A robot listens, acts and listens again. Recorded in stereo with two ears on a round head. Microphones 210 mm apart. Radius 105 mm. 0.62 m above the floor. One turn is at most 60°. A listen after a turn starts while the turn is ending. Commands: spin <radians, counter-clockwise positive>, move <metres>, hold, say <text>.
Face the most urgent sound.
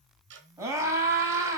spin -0.52
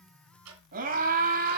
spin -1.05
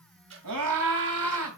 spin -1.05
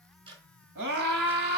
spin -0.87
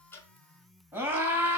spin -0.17
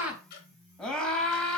say Facing the scream, 2 to 4 m away.